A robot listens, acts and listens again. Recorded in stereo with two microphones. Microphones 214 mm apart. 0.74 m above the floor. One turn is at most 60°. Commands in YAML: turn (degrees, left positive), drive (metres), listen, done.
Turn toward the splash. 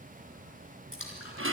turn: 60
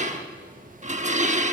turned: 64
turn: 25
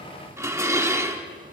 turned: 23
done: "Facing where the splash came from. I can't hear it now."